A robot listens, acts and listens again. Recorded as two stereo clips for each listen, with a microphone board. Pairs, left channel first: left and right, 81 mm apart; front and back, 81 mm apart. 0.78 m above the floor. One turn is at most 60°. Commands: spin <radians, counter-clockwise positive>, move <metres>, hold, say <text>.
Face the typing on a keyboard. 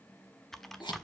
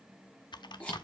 say Facing the typing on a keyboard.